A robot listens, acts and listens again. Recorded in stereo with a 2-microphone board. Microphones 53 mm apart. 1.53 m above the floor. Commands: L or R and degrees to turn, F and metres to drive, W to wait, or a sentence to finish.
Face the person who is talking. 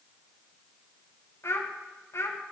L60
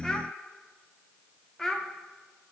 L10
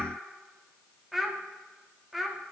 Found it: a child speaking, straight ahead, under 1 m away.